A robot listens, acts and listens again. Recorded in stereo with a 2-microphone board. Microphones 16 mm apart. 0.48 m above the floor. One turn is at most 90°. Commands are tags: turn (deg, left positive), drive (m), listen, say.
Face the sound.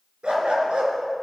<turn deg="-90"/>
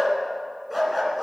<turn deg="-15"/>
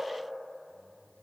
<listen/>
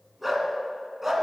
<turn deg="-20"/>
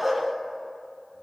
<turn deg="-10"/>
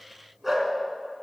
<turn deg="-15"/>
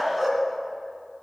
<say>Found it: a dog barking, straight ahead, 2 to 4 m away.</say>